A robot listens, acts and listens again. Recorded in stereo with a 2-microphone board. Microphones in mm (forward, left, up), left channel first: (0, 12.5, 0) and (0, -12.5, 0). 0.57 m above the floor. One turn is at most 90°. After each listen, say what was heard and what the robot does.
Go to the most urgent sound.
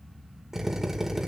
Keep listening.
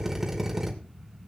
Keep listening.
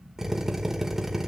I can't make out anything urgent, only a drill.